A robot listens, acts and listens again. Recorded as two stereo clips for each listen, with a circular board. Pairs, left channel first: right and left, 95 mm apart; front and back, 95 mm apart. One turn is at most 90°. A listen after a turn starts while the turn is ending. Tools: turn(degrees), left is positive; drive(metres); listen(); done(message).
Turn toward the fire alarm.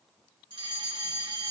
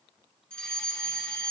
turn(degrees=80)
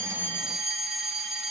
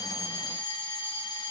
done("Found it: a fire alarm, straight ahead.")